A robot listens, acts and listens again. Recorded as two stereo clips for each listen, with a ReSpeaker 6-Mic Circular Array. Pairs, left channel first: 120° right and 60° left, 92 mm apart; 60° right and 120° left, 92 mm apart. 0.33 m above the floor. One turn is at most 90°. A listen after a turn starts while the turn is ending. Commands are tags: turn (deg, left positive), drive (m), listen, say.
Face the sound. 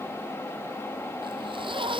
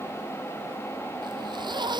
<turn deg="85"/>
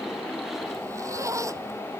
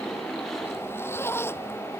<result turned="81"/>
<say>Found it: a zipper, straight ahead.</say>